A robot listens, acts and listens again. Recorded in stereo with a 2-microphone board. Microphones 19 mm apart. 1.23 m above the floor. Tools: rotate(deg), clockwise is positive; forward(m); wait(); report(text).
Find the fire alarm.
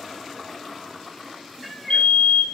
rotate(-60)
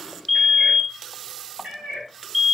report("Facing the fire alarm.")